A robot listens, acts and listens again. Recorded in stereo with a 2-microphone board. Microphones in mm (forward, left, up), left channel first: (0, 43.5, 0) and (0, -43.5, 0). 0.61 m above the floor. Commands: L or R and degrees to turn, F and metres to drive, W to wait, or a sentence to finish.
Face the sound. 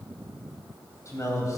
L35
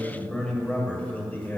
L20
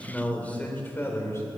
L35
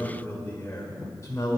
L35
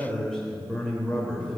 Facing the man speaking, 1 to 2 m away.